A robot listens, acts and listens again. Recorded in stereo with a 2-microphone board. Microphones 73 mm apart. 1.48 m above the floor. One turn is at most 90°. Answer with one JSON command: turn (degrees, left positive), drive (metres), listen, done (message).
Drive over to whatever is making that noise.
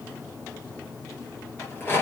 {"turn": 30}
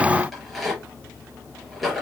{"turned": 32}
{"drive": 1.0}
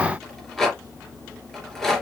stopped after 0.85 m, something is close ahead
{"done": "Blocked. The rattle is further on, straight ahead."}